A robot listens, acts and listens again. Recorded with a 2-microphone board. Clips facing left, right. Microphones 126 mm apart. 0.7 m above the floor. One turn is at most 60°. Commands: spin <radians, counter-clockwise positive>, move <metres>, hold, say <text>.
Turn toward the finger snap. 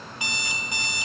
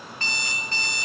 hold
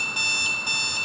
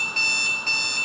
hold
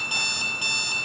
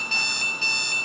say I can't make out a finger snap, only an alarm clock.